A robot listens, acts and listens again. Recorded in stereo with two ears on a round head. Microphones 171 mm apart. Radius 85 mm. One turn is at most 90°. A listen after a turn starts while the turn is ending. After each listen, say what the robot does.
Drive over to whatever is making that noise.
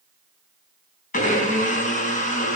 Turn 45° left.
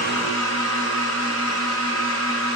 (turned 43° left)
Turn 90° left.
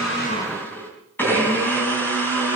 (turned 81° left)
Turn 10° left.
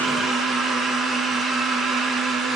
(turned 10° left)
Drive 1.0 m forward.
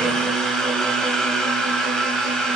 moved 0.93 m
Drive 1.0 m forward.
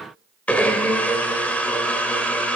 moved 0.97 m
Turn 10° left.
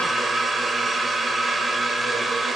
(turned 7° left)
Drive 1.0 m forward.
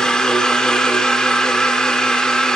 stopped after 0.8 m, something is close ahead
I am next to the blender.